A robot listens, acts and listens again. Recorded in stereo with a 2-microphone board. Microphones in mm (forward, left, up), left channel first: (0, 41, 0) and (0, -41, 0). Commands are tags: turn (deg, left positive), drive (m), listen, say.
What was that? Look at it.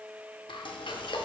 <turn deg="90"/>
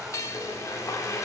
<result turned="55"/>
<turn deg="40"/>
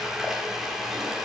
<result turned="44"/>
<say>Found it: frying, straight ahead.</say>